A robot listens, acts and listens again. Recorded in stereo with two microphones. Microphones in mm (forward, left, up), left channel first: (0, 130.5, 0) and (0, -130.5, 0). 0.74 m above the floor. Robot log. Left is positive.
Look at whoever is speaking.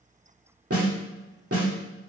cmd idle
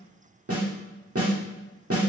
cmd idle
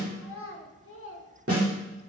note: The child speaking: about 55° left or 125° left.
cmd yaw +55
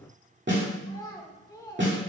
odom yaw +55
note: So it is at 15° left.
cmd yaw +15
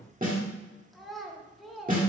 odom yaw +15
end: Facing the child speaking.